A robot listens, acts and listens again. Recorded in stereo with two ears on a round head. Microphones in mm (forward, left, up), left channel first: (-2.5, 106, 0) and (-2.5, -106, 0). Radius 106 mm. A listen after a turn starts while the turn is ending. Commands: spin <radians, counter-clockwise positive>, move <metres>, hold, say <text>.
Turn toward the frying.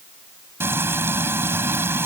spin -0.52
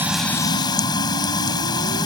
spin 0.35
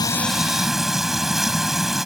say Found it: frying, straight ahead.